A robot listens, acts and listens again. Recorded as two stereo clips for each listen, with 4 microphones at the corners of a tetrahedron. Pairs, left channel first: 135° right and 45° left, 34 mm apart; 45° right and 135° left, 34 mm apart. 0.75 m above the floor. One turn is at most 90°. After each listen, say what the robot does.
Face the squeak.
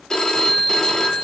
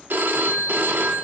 Keep listening.
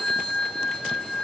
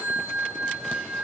Keep listening.
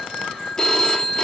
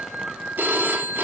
I can't make out a squeak, only a phone ringing.